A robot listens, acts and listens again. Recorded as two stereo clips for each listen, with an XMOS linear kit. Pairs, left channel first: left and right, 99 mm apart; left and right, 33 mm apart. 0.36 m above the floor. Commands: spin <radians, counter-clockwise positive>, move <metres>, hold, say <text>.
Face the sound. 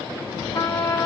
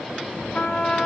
spin 0.61
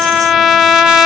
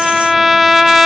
say Facing the trumpet.